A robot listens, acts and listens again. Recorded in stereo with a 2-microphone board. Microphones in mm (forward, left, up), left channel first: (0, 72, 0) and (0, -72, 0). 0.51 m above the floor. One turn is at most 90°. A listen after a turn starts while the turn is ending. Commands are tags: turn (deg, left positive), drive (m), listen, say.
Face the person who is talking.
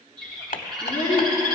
<turn deg="40"/>
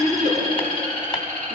<say>Found it: a child speaking, straight ahead.</say>